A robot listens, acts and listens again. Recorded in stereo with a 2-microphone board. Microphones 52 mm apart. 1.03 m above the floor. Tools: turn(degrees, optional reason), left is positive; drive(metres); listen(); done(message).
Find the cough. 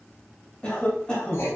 turn(degrees=20, reason="The cough: about 20° left or 160° left.")
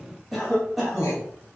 done("Found it: a cough, straight ahead, 1 to 2 m away.")